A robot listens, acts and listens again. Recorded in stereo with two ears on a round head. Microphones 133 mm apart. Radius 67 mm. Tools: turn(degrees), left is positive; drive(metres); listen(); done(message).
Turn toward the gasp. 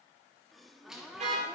turn(degrees=30)
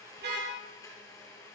listen()
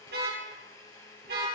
done("I heard a gasp, but can't make it out now. It was about 30° right or 150° left.")